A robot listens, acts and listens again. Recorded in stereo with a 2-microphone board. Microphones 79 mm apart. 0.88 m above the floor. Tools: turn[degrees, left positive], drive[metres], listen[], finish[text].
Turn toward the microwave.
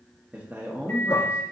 Thought: The microwave: about 25° left or 155° left.
Action: turn[25]
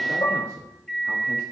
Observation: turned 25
Action: finish[Facing the microwave.]